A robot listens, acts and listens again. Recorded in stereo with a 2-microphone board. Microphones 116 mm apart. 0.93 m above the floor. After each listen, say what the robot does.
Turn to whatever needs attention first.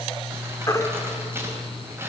Turn 30° left.
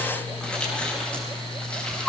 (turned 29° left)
Facing the baby crying, 1 to 2 m away.